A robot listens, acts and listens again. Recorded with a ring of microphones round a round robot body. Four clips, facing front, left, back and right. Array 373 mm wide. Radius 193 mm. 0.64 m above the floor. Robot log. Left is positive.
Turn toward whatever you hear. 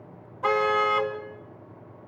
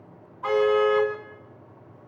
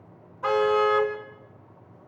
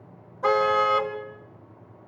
note: The car horn: 105° right.
cmd yaw -105
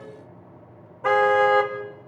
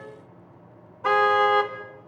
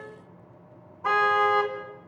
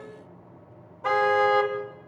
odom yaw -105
note: The car horn is now 10° left.
cmd yaw +10
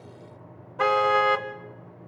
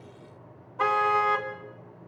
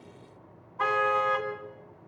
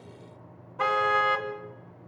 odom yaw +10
end: Facing the car horn, 2 to 4 m away.